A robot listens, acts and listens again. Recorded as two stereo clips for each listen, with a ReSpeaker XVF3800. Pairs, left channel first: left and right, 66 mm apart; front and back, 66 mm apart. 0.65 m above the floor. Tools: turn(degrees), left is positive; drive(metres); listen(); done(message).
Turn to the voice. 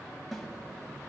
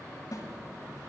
listen()
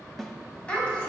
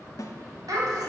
turn(degrees=165)
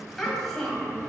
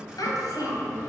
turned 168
done("Found it: a child speaking, straight ahead, 2 to 4 m away.")